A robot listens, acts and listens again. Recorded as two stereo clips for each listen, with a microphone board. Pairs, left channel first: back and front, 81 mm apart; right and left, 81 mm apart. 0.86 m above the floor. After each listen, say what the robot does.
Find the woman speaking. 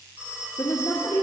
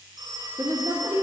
Turn 125° left.
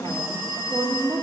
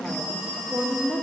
Facing the woman speaking.